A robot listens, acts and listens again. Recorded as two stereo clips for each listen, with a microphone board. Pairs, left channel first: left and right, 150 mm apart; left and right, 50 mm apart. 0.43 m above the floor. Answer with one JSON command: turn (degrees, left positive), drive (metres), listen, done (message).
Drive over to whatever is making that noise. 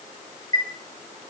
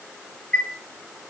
{"turn": 25}
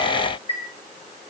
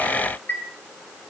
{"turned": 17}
{"turn": 140}
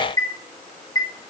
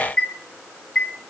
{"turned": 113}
{"turn": 25}
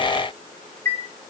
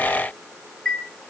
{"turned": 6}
{"turn": 20}
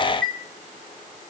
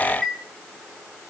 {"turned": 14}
{"drive": 1.0}
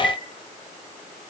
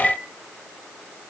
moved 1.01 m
{"drive": 1.0}
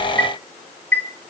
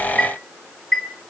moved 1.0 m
{"turn": 15}
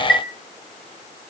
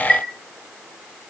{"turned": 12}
{"drive": 1.0}
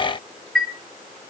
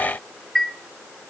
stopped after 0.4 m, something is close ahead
{"done": "I am next to the chime."}